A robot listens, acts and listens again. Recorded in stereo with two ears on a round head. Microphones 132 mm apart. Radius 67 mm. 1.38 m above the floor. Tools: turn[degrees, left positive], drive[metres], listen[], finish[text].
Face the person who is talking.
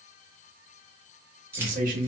Thought: The man speaking: about 65° right or 115° right.
Action: turn[-65]
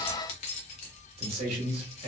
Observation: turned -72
Thought: So it is at 40° right.
Action: turn[-40]
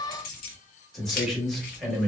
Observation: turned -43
Action: finish[Facing the man speaking.]